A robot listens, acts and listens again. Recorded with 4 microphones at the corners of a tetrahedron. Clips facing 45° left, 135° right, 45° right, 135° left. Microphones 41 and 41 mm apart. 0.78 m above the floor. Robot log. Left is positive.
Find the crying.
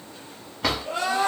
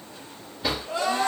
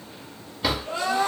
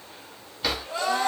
end: Facing the crying.